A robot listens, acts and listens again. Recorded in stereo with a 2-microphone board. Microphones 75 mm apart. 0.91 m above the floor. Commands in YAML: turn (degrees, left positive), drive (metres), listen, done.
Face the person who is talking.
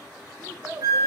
turn: -30
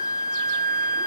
listen: true
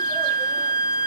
listen: true
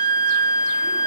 done: "I heard a child speaking, but can't make it out now. It was about straight ahead or 120° right."